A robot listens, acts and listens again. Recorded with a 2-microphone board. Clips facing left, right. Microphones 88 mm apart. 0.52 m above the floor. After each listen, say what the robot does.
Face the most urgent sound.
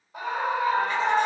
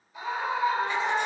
Turn 55° left.
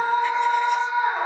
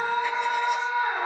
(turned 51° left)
Turn 25° left.
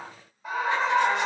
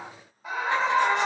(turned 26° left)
Facing the scream.